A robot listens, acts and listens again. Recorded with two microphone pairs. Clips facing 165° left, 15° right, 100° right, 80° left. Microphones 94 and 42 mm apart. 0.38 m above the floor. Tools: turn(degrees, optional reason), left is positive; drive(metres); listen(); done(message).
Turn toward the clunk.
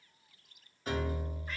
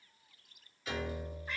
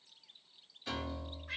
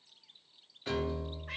listen()
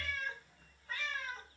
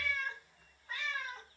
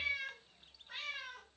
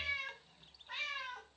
listen()
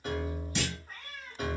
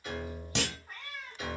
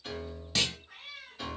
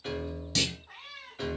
turn(degrees=-20, reason="The clunk: 20° right.")
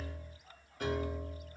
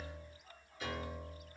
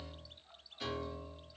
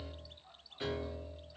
done("I heard a clunk from this way, but can't make it out now.")